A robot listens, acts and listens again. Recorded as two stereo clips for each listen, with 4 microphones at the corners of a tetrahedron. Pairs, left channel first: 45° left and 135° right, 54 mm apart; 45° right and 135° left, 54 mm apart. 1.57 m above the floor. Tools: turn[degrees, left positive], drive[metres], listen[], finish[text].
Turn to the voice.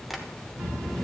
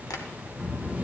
Thought: The child speaking: 80° right.
Action: turn[-80]
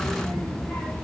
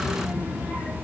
Action: finish[Facing the child speaking.]